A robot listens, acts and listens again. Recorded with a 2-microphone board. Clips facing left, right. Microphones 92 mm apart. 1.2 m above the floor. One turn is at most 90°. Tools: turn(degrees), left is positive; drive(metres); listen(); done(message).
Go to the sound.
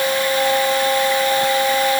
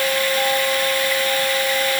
listen()
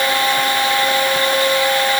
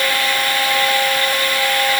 listen()
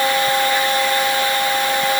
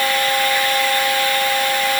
done("I can't make out anything to turn to.")